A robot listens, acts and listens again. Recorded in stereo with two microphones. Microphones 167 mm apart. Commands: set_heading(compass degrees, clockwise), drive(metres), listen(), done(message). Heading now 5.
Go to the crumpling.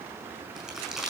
set_heading(35)
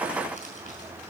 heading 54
listen()
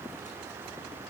listen()
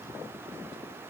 done("I heard crumpling, but can't make it out now. It was about 45° left or 125° right. I did not reach it.")